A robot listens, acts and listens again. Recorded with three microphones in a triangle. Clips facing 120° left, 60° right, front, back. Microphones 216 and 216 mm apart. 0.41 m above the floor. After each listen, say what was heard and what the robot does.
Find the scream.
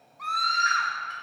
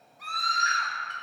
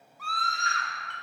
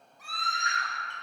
The scream: 115° right. Turn 115° right.
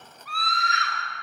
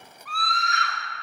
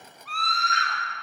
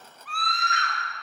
The scream is now 35° right. Turn 35° right.
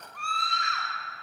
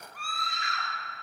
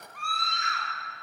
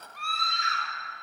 The scream is now 20° left. Turn 20° left.
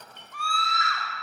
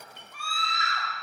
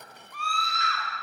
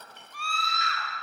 Facing the scream, 1 to 2 m away.